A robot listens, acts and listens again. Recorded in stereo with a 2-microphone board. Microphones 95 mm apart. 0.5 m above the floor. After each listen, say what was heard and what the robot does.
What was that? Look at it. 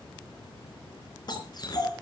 The dog barking: about 45° left or 135° left. Turn 45° left.
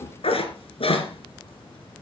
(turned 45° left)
So it is at 105° left. Turn 105° left.
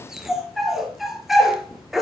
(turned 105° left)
Found it: a dog barking, straight ahead.